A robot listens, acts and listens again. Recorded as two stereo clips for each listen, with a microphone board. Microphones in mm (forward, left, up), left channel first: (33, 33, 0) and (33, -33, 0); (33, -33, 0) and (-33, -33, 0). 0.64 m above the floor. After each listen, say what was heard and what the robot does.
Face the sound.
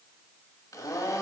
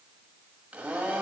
The blender: 110° left. Turn 110° left.
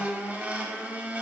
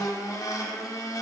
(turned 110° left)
The blender is now 25° right. Turn 25° right.
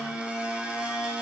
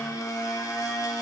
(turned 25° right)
The blender is now 20° right. Turn 20° right.
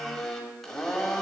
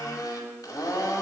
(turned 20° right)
Found it: a blender, straight ahead.